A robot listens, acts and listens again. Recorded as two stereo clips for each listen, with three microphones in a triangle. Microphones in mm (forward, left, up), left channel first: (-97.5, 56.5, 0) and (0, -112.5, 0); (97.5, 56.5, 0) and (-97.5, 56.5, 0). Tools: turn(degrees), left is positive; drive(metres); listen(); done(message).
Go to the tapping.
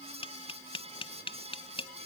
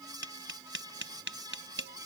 turn(degrees=180)
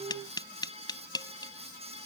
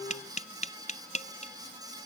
turn(degrees=50)
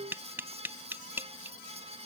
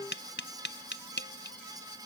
turn(degrees=20)
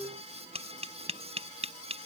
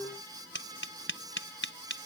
drive(metres=1.0)
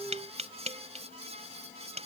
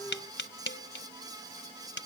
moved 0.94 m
drive(metres=1.0)
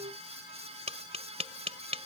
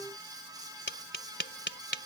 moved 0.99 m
drive(metres=1.0)
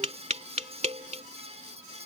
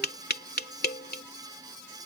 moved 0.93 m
turn(degrees=-15)
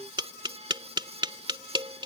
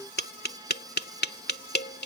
drive(metres=1.0)
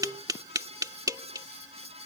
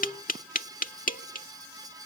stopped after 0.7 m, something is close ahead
done("Arrived at the tapping, straight ahead.")